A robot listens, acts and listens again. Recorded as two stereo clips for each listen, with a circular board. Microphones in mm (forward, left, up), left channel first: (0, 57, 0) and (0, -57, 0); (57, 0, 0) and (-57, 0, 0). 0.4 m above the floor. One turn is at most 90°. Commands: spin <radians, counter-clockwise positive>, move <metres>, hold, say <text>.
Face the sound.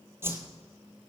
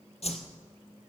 spin -0.35
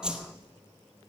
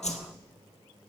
say Facing the whoosh.